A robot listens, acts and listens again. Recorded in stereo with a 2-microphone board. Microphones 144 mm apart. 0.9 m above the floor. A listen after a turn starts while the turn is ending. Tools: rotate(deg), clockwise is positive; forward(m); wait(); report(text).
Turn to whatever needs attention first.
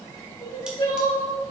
rotate(-35)
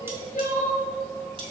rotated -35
rotate(-110)
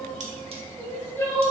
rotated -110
rotate(-15)
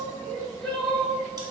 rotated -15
report("Found it: crying, straight ahead, 1 to 2 m away.")